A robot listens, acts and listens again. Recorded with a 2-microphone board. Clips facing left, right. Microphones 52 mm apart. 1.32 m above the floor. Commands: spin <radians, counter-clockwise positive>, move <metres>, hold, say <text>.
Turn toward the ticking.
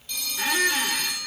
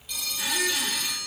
hold
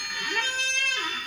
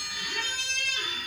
hold
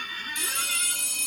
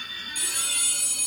say I can't make out ticking, only a squeak and a phone ringing.